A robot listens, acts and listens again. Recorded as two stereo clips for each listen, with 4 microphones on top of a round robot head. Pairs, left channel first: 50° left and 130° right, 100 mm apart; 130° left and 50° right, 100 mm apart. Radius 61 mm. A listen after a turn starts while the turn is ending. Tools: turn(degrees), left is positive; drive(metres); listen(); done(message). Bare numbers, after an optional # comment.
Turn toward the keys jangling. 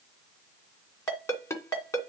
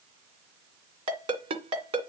listen()
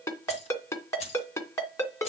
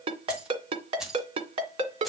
# The keys jangling: 35° left.
turn(35)
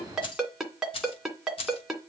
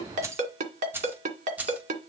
# The keys jangling is now 25° left.
turn(25)
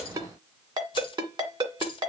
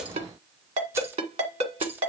# The keys jangling is now 20° left.
turn(20)
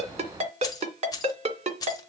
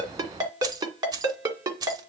done("Facing the keys jangling, 1 to 2 m away.")